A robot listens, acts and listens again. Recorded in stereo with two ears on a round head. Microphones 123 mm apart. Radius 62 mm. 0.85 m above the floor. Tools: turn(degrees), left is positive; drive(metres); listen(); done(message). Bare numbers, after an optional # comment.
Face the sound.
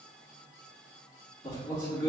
# The man speaking: about 30° left or 150° left.
turn(30)
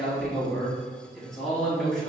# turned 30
done("Found it: a man speaking, straight ahead.")